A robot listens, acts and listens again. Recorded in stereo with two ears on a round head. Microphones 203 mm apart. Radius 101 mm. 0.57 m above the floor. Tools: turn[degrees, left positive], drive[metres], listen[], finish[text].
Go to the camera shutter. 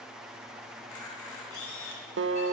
Thought: The camera shutter: about 70° left or 110° left.
Action: turn[70]
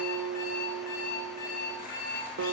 Action: listen[]
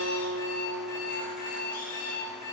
Action: listen[]
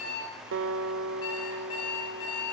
Action: finish[I heard a camera shutter, but can't make it out now. It was about straight ahead or 40° left. I did not reach it.]